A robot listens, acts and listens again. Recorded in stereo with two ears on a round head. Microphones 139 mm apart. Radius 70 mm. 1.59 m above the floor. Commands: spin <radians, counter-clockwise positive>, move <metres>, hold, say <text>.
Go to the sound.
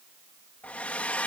spin 0.52
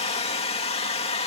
spin 2.44
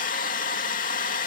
spin 0.87
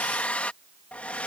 spin 0.17
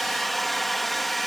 move 1.0
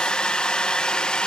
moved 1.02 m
move 1.0
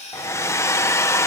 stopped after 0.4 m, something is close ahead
spin 0.26
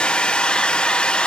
say I am next to the hair dryer.